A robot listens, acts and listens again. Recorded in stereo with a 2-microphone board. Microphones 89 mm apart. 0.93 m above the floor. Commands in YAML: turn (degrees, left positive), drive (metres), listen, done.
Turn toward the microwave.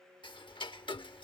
listen: true
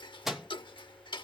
turn: 30
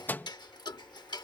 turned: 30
turn: 155
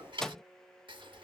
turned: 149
done: "Facing the microwave."